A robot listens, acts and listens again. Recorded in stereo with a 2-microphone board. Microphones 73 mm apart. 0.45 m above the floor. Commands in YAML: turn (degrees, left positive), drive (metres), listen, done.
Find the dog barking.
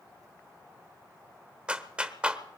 listen: true
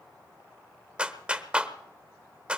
listen: true
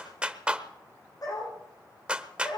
turn: 55
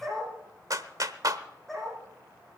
done: "Facing the dog barking, over 4 m away."